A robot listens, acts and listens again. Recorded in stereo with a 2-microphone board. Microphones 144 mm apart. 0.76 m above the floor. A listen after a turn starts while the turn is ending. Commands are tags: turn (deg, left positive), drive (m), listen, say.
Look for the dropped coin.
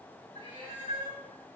<listen/>
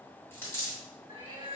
<turn deg="15"/>
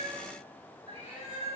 <listen/>
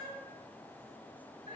<say>I heard a dropped coin, but can't make it out now. It was about straight ahead or 150° left.</say>